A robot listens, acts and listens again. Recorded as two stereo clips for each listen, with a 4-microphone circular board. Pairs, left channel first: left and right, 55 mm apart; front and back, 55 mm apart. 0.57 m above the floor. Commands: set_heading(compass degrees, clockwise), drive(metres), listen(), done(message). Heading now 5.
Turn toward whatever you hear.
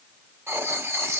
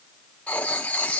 set_heading(65)
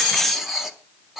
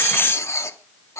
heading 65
done("Found it: writing, straight ahead.")